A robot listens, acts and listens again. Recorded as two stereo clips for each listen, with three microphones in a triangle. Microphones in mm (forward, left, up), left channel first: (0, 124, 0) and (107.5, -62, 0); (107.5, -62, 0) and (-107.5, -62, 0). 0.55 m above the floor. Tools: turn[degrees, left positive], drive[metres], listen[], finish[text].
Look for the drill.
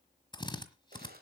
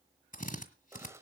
Thought: The drill: 50° left.
Action: turn[50]
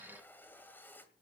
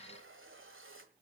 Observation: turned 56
Action: listen[]
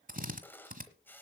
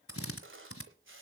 Action: finish[Facing the drill, 1 to 2 m away.]